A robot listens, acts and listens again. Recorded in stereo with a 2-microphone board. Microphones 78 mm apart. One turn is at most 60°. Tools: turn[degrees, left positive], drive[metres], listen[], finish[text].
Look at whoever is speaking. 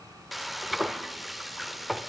Action: listen[]
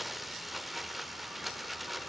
Action: listen[]
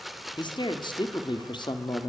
Action: turn[60]
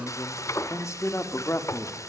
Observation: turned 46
Thought: So it is at 40° left.
Action: turn[40]
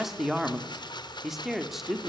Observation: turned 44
Action: finish[Found it: a man speaking, straight ahead.]